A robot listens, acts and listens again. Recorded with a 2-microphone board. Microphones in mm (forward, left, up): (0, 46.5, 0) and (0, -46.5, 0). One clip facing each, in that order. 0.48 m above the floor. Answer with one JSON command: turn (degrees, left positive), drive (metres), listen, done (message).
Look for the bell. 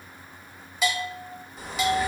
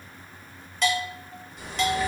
{"turn": 30}
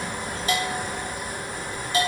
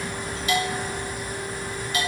{"turn": 145}
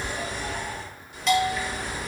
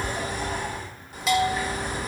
{"done": "Found it: a bell, straight ahead, under 1 m away."}